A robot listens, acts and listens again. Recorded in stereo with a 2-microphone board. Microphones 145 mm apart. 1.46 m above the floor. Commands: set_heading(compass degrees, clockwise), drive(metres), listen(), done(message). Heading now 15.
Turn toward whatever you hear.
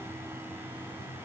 listen()
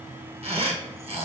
set_heading(60)
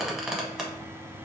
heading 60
done("Facing the squeak.")